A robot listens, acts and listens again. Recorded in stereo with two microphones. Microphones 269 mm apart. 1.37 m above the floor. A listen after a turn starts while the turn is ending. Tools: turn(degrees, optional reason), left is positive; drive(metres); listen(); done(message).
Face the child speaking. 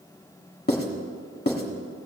listen()
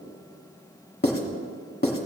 listen()
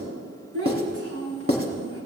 turn(degrees=-60, reason="The child speaking: about 60° right or 120° right.")
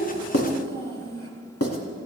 turn(degrees=-55, reason="So it is at 55° right.")
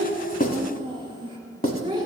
turn(degrees=-20, reason="The child speaking is now 20° right.")
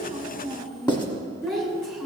done("Facing the child speaking, 2 to 4 m away.")